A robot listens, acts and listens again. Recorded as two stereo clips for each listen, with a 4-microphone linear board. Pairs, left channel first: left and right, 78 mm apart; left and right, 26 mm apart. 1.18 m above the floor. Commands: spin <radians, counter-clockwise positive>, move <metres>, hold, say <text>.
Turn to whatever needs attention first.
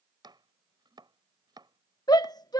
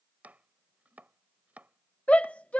spin 1.05
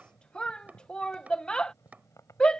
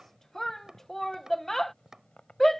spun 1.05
spin 0.17
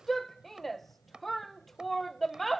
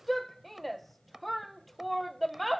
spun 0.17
say Found it: a shout, straight ahead.